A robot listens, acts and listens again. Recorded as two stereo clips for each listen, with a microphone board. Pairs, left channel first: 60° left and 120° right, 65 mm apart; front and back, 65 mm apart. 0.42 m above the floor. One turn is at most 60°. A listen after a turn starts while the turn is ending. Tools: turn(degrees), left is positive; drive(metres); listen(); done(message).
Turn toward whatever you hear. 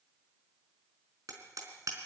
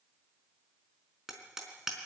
turn(degrees=-60)
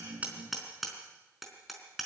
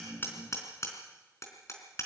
turn(degrees=-30)
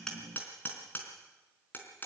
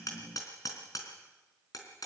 done("Facing the hammering, over 4 m away.")